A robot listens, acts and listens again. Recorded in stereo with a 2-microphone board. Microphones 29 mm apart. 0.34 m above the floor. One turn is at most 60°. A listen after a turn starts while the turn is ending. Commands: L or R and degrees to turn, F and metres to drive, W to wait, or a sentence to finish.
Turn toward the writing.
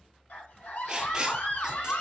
R25
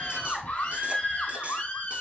W
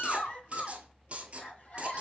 R60
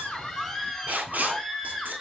R60
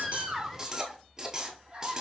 R20
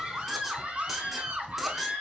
W
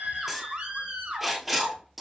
Found it: writing, straight ahead.